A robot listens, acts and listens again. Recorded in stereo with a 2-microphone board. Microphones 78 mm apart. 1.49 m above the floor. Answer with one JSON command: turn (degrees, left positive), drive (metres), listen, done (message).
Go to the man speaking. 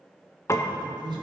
{"turn": -90}
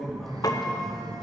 {"drive": 1.0}
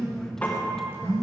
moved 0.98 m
{"listen": true}
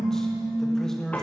{"drive": 1.0}
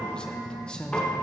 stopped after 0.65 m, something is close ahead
{"turn": 10}
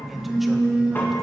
{"listen": true}
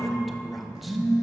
{"listen": true}
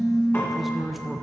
{"done": "I am next to the man speaking."}